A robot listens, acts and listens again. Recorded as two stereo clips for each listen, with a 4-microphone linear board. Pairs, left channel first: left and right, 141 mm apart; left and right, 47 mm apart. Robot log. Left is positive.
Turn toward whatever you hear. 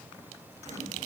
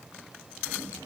cmd idle
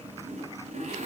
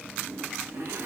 note: The zipper: about 55° right or 125° right.
cmd yaw -55
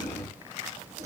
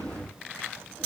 cmd idle
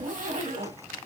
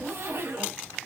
note: So it is at 70° right.
cmd yaw -70
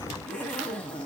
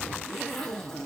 note: The zipper is now 10° left.
cmd yaw +10
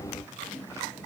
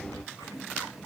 end: Found it: a zipper, straight ahead, 1 to 2 m away.